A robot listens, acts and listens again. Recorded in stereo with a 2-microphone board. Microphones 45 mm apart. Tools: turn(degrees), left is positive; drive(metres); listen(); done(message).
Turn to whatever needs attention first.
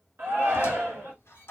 turn(degrees=-55)
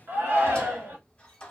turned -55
turn(degrees=-60)
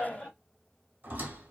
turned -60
turn(degrees=15)
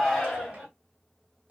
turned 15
done("Facing the shout, 1 to 2 m away.")